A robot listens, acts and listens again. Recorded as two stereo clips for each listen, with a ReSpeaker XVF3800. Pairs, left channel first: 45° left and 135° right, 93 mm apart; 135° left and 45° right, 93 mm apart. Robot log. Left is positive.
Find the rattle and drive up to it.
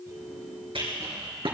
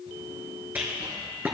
note: The rattle: 115° right.
cmd yaw -115
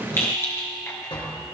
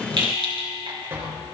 note: The rattle is now 20° right.
cmd yaw -20
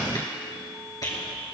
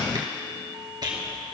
cmd fwd 1.0
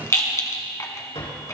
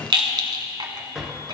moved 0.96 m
note: The rattle is now 10° right.
cmd yaw -10
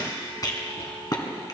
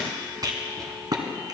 cmd fwd 1.0
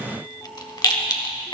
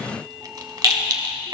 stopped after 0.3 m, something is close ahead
end: Arrived at the rattle, straight ahead.